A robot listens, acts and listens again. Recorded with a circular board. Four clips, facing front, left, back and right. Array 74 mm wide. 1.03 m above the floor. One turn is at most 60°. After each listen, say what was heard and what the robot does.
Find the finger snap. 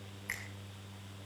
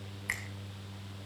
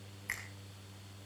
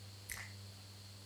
The finger snap: 90° left. Turn 60° left.
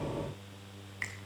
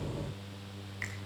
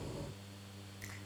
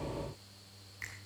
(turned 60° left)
The finger snap is now 20° left. Turn 20° left.
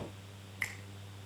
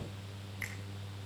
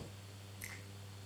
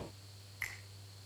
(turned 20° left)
Found it: a finger snap, straight ahead, over 4 m away.